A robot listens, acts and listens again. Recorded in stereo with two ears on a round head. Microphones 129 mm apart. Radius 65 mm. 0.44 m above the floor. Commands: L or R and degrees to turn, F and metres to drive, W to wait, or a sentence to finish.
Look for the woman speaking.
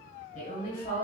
L60
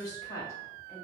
L20
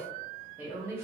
R20
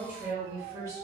R25
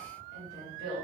R35
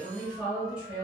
Found it: a woman speaking, straight ahead.